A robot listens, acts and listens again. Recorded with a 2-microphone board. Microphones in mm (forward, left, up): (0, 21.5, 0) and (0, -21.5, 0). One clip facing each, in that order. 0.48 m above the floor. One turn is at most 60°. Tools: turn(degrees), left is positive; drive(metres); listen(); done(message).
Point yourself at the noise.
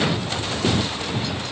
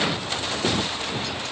listen()
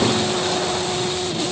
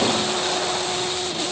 listen()
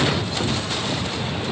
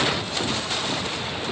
done("I can't make out anything to turn to.")